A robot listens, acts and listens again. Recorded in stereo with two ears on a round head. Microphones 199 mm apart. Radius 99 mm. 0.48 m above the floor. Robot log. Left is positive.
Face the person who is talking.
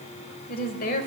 note: The woman speaking: about 45° left or 135° left.
cmd yaw +45
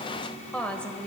end: Found it: a woman speaking, straight ahead.